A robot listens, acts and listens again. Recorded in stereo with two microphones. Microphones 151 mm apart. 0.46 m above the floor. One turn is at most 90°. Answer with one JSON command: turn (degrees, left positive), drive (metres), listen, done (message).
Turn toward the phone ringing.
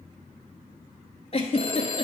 {"turn": 40}
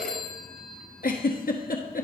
{"done": "Found it: a phone ringing, straight ahead, 1 to 2 m away."}